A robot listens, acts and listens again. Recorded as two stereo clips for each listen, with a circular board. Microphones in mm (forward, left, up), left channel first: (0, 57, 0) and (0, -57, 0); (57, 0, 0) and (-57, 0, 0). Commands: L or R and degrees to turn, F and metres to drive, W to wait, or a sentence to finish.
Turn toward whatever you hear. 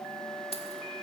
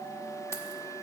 L65
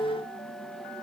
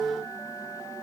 W
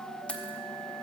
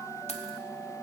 L10
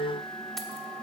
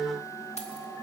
W
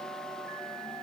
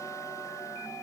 W
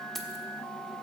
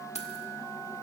Facing the keys jangling, 1 to 2 m away.